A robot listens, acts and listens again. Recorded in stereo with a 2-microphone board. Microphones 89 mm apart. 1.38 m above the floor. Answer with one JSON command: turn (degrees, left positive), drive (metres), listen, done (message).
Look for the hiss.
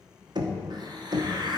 {"turn": -50}
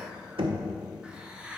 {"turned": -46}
{"turn": -10}
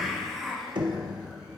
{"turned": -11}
{"done": "Found it: a hiss, straight ahead, under 1 m away."}